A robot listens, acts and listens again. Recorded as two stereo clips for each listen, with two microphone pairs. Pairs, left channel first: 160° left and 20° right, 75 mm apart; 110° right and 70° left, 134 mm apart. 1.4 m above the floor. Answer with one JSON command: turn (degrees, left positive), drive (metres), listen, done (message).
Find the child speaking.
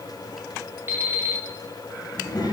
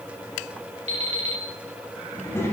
{"turn": 180}
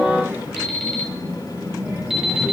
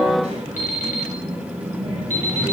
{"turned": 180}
{"turn": 40}
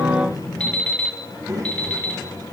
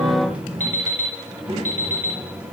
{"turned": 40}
{"turn": 25}
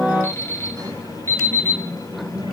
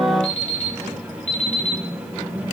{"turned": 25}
{"done": "Facing the child speaking, over 4 m away."}